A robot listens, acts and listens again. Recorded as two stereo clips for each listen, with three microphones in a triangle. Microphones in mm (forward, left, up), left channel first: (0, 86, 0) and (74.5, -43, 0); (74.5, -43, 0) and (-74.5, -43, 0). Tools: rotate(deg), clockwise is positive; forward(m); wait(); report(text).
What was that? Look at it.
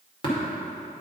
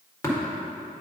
rotate(-65)
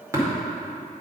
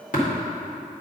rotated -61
rotate(-10)
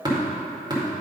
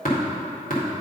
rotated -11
report("Facing the tapping.")